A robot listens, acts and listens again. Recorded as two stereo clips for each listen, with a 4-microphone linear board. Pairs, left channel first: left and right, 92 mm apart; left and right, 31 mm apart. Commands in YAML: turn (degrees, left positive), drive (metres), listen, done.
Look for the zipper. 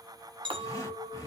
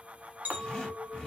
turn: 35
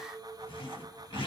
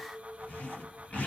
turn: 110
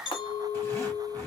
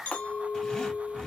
turn: 30
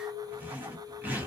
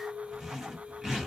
turn: -15
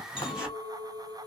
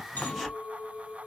done: "Found it: a zipper, straight ahead."